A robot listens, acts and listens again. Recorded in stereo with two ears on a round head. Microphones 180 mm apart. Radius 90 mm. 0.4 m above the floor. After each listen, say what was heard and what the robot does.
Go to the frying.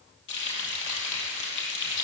The frying: about 65° left or 115° left. Turn 65° left.
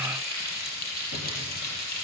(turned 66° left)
So it is at 50° left. Turn 50° left.
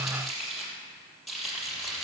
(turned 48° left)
Drive 1.0 m forward.
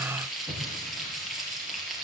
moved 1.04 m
Drive 1.0 m forward.
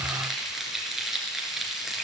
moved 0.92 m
Drive 1.0 m forward.
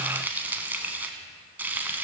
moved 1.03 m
The frying is now 10° right. Turn 10° right.
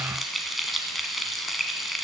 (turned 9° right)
Drive 1.0 m forward.
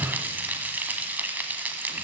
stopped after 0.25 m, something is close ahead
The frying is now 10° right. Turn 10° right.
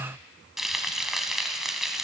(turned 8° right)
Arrived at the frying, straight ahead.